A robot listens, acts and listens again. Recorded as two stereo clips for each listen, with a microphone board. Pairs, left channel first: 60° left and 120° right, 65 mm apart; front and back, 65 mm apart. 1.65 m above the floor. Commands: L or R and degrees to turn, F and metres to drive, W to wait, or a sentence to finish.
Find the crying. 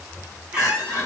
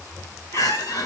L10
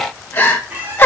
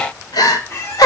Found it: crying, straight ahead.